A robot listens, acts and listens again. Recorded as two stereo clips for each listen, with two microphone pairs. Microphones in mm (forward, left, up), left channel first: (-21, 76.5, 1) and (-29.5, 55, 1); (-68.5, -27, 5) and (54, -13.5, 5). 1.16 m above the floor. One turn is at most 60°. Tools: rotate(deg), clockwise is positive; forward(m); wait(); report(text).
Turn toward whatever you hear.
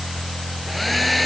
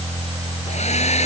rotate(-60)
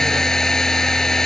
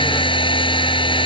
rotate(-60)
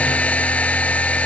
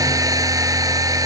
rotate(-60)
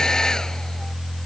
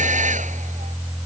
rotate(-10)
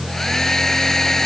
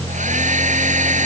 report("Facing the hair dryer.")